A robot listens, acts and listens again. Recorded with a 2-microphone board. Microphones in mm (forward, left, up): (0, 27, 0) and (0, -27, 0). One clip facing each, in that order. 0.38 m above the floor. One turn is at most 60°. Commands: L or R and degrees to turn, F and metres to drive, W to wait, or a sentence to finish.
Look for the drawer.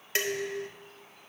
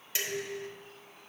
W
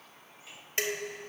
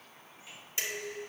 W
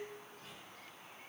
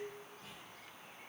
I can't make out a drawer to turn to.